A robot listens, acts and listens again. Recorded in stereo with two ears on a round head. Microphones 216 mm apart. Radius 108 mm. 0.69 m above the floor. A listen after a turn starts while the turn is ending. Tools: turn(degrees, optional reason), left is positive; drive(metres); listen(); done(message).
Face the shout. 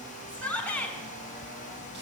turn(degrees=30)
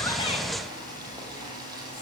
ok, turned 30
listen()
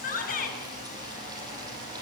turn(degrees=140, reason="So it is at 140° left.")
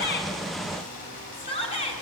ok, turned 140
turn(degrees=25, reason="The shout is now 25° left.")
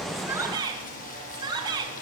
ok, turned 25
turn(degrees=-20, reason="The shout is now 20° right.")
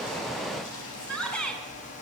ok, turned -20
done("Found it: a shout, straight ahead, over 4 m away.")